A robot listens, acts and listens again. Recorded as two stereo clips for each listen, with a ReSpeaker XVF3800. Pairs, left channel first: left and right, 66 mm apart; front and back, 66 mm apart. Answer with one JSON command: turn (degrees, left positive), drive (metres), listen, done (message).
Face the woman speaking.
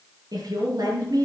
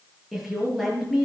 {"turn": -95}
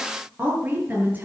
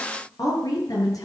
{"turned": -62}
{"turn": -25}
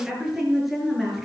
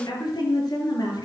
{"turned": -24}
{"done": "Found it: a woman speaking, straight ahead."}